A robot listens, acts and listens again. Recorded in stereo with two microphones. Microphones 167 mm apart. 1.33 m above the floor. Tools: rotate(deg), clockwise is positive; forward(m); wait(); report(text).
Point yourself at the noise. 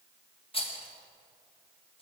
rotate(-35)
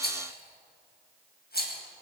rotate(-110)
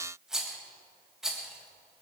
report("Found it: a rattle, straight ahead.")